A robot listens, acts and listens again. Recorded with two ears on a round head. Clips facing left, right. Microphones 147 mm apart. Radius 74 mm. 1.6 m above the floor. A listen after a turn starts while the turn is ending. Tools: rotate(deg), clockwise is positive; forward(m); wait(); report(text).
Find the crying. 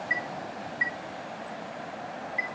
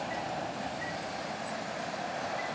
wait()
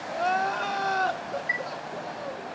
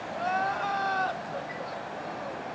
rotate(-60)
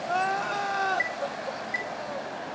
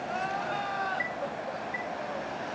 rotate(-55)
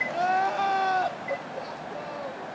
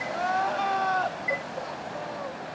rotate(-10)
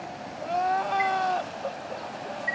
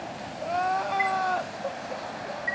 report("Facing the crying, 1 to 2 m away.")